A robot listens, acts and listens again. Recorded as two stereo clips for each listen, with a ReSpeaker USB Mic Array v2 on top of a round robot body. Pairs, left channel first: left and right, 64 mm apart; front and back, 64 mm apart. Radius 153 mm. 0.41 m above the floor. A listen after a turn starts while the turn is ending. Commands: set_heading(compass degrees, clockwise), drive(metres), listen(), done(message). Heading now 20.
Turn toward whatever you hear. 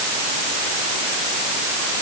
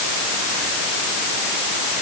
listen()
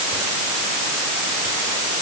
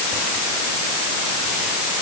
listen()
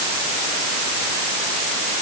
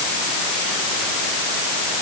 done("I can't make out anything to turn to.")